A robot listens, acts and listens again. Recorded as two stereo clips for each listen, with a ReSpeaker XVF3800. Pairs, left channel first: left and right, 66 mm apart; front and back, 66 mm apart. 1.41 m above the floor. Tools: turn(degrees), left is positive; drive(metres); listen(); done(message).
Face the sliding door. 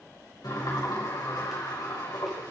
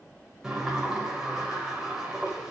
turn(degrees=100)
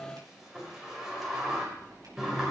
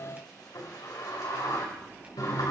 turn(degrees=-10)
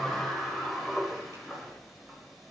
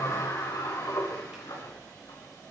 done("Facing the sliding door.")